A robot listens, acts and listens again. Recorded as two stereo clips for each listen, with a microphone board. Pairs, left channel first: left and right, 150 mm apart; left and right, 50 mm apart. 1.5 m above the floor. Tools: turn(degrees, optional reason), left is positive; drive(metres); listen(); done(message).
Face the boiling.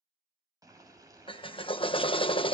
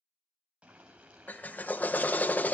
turn(degrees=-25, reason="The boiling: about 25° right or 155° right.")
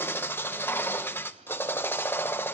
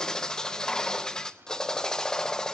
listen()
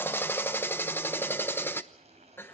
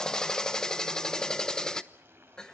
turn(degrees=-135, reason="So it is at 135° right.")
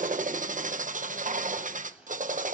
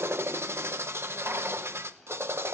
done("Found it: boiling, straight ahead, over 4 m away.")